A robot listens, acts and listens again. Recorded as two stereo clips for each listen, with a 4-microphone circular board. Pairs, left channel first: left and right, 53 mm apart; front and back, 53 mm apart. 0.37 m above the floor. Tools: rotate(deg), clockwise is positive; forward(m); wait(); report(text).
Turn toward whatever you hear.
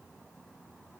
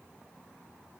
wait()
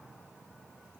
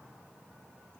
wait()
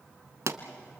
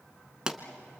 rotate(105)
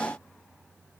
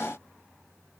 report("I heard a pop from this way, but can't make it out now.")